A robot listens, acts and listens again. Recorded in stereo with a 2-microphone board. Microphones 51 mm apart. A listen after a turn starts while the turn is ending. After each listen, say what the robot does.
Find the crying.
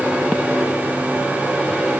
Keep listening.
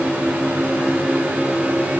Keep listening.
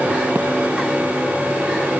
I can't make out crying to turn to.